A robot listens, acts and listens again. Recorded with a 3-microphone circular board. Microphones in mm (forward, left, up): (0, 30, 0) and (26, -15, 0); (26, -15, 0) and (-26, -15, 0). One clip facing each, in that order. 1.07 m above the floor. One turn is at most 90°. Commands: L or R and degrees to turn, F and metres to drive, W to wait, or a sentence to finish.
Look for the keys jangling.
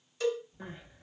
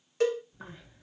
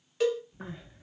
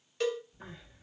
R35
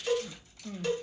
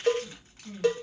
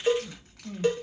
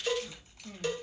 R10
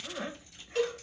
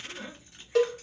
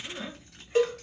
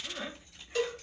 Facing the keys jangling, 2 to 4 m away.